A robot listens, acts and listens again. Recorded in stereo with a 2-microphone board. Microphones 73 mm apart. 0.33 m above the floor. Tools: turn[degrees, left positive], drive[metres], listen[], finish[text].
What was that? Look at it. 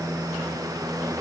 Action: listen[]
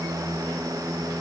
Action: listen[]
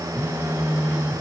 Thought: The phone buzzing: about 20° right or 160° right.
Action: turn[-20]
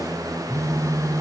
Thought: So it is at 135° right.
Action: turn[-135]
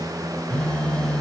Thought: The phone buzzing is now 10° left.
Action: turn[10]
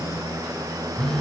Action: finish[Facing the phone buzzing, 1 to 2 m away.]